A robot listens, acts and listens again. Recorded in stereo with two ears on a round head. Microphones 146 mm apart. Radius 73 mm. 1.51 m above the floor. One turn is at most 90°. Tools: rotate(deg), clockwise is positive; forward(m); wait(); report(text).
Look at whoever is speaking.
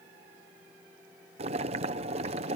wait()
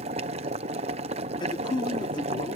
rotate(-30)
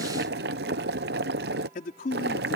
rotate(-90)
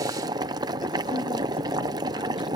rotate(-30)
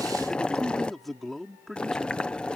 report("Found it: a man speaking, straight ahead.")